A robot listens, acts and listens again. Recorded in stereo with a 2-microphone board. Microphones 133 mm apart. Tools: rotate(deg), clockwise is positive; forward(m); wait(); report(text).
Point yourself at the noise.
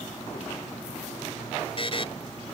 rotate(-45)
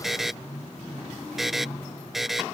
report("Found it: a buzzer, straight ahead.")